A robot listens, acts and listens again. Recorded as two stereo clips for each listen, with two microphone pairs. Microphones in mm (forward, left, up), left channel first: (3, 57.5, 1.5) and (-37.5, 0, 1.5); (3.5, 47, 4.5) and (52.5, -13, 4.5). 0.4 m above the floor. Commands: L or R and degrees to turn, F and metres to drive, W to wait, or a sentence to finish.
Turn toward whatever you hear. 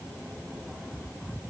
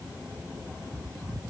W
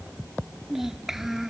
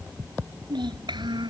R40
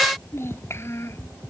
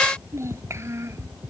Facing the child speaking.